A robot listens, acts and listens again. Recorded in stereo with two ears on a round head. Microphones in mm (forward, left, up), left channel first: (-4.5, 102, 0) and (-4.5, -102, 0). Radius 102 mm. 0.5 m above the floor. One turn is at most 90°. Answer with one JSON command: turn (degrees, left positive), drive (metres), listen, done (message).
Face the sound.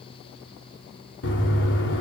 {"turn": 55}
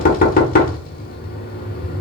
{"turn": 50}
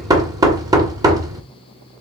{"turn": -20}
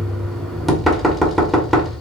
{"done": "Facing the knocking."}